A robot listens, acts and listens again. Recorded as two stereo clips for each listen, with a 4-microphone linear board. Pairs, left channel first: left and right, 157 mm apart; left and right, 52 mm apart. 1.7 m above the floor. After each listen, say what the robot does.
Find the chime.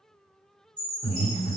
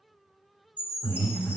Turn 30° right.
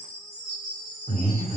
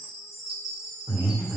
Found it: a chime, straight ahead, 1 to 2 m away.